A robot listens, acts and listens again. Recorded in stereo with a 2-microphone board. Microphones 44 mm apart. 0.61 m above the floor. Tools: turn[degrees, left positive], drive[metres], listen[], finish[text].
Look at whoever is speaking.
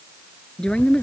Thought: The woman speaking: about 20° left or 160° left.
Action: turn[20]
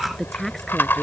Action: finish[Found it: a woman speaking, straight ahead.]